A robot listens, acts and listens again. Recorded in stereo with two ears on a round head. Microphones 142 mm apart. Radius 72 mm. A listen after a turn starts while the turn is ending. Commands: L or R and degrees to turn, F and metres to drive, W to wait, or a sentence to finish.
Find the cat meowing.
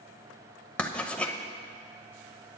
W
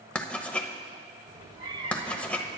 R40
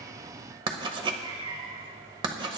R25
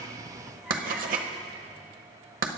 Facing the cat meowing.